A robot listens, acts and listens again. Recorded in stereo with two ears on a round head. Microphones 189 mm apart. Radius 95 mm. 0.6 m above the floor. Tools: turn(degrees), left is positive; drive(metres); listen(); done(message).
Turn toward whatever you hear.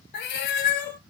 turn(degrees=55)
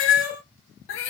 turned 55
turn(degrees=65)
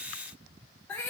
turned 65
turn(degrees=10)
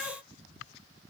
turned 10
listen()
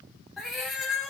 done("Facing the cat meowing.")